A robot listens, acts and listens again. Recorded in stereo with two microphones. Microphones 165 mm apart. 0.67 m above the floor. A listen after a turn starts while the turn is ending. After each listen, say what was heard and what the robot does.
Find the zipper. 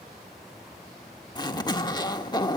The zipper: about 25° left or 155° left. Turn 25° left.
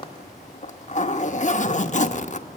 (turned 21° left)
So it is at 130° left. Turn 130° left.
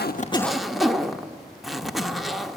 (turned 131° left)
Found it: a zipper, straight ahead.